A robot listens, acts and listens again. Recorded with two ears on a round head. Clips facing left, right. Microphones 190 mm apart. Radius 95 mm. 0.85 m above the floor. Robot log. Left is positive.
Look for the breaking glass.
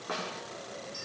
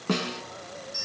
cmd idle
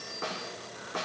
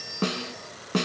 cmd idle
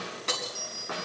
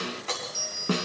note: The breaking glass: about 55° left or 125° left.
cmd yaw +55
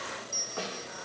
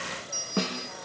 cmd idle
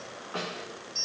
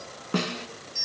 end: I heard breaking glass, but can't make it out now. It was about straight ahead or 70° left.